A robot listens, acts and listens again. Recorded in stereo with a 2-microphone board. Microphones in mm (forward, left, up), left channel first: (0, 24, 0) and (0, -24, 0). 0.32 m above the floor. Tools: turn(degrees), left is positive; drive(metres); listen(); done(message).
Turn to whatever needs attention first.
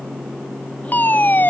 turn(degrees=40)
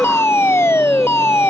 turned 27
turn(degrees=110)
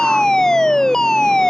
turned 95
turn(degrees=15)
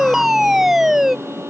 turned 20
done("Facing the fire alarm.")